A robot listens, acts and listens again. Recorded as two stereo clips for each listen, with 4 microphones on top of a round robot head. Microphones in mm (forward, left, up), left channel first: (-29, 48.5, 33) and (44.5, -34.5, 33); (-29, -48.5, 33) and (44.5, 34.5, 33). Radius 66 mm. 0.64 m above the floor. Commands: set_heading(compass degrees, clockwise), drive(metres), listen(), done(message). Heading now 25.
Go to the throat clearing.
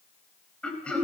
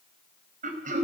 set_heading(335)
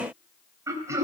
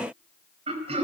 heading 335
set_heading(320)
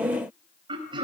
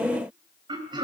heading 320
drive(1.0)
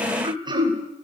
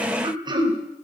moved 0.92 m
drive(1.0)
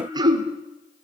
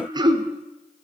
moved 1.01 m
drive(1.0)
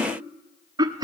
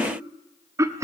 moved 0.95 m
drive(1.0)
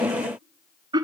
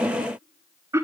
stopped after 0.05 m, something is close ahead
set_heading(330)
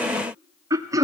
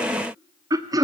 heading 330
done("I am next to the throat clearing.")